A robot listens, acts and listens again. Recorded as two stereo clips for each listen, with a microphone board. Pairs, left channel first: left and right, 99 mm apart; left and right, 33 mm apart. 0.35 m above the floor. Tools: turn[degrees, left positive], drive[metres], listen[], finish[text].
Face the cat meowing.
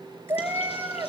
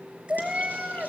Thought: The cat meowing: about 20° right or 160° right.
Action: turn[-20]
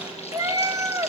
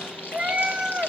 Thought: The cat meowing: about 30° right or 150° right.
Action: turn[-30]
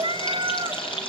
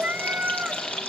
Thought: So it is at 130° right.
Action: turn[-130]
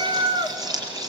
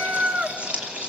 Thought: The cat meowing is now 60° right.
Action: turn[-60]
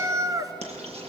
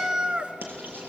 Thought: The cat meowing is now 35° right.
Action: turn[-35]
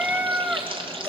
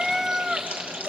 Thought: The cat meowing is now 15° right.
Action: turn[-15]
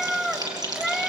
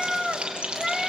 Action: finish[Facing the cat meowing, 1 to 2 m away.]